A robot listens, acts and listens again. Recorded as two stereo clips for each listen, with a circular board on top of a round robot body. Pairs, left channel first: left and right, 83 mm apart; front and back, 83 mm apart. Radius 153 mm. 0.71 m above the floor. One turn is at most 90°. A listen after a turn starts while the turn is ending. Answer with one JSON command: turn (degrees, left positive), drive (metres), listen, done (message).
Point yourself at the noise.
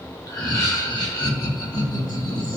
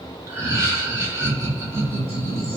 {"turn": 90}
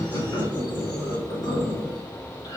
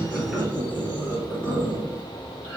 {"turn": 70}
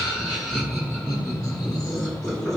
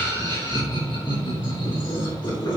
{"done": "Found it: laughter, straight ahead."}